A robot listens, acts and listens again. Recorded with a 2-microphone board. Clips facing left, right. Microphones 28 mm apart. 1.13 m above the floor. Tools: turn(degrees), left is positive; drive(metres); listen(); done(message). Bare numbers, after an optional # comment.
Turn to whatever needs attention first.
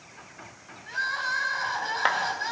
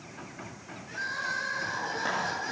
# The crying: about 70° left or 110° left.
turn(70)
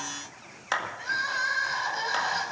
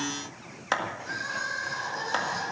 # So it is at 40° left.
turn(40)
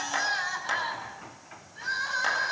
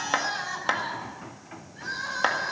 # The crying is now 10° left.
turn(10)
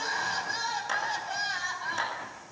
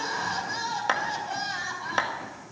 done("Found it: crying, straight ahead, over 4 m away.")